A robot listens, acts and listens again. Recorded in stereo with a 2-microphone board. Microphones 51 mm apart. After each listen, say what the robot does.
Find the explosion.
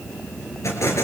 Turn 90° left.
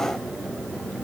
I heard an explosion from this way, but can't make it out now.